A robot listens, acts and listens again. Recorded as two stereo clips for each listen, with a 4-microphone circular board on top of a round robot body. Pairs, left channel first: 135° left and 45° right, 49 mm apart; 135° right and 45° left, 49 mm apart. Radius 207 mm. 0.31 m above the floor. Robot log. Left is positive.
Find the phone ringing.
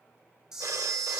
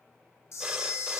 note: The phone ringing: 25° right.
cmd yaw -25
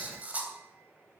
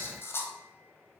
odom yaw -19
cmd idle
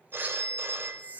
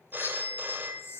end: Facing the phone ringing, 1 to 2 m away.